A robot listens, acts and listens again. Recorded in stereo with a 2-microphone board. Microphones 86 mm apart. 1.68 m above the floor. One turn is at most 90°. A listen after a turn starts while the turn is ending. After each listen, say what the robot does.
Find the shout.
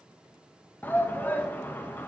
Turn 25° left.
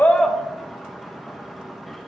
Found it: a shout, straight ahead.